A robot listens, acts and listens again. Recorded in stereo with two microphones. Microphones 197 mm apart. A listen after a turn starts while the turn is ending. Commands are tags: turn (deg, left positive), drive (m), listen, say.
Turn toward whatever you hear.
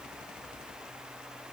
<listen/>
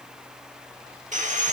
<turn deg="-40"/>
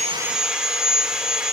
<say>Found it: sawing, straight ahead, 1 to 2 m away.</say>